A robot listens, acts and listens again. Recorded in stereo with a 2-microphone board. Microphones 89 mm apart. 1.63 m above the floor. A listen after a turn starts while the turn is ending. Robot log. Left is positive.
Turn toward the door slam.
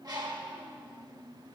cmd idle
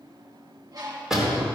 cmd yaw -30
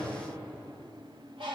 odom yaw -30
cmd idle
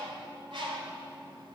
end: I heard a door slam, but can't make it out now. It was about 25° left or 145° right.